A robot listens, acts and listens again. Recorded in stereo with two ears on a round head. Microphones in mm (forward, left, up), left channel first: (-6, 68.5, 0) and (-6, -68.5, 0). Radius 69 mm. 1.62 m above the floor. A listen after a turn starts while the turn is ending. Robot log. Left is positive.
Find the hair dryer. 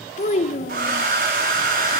note: The hair dryer: about 60° right or 120° right.
cmd yaw -60
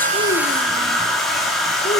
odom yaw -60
end: Found it: a hair dryer, straight ahead.